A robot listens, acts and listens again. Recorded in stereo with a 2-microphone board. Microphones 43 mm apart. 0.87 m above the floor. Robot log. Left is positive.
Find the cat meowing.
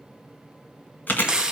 cmd idle
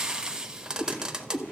note: The cat meowing: about 65° left or 115° left.
cmd yaw +65
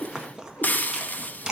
note: So it is at 50° left.
cmd yaw +50
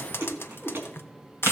end: Found it: a cat meowing, straight ahead, over 4 m away.